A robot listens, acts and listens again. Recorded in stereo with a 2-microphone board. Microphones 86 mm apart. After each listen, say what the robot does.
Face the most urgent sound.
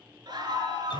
Turn 55° right.
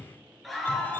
Found it: a scream, straight ahead, over 4 m away.